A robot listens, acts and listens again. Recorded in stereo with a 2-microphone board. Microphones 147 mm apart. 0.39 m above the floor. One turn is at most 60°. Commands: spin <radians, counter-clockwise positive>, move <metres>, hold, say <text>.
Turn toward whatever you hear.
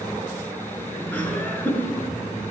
spin 0.26
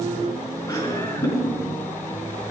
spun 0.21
spin 1.05
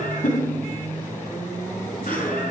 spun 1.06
spin 1.05
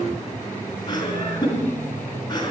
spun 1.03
spin 0.61
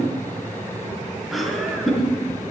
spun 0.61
say Facing the laughter.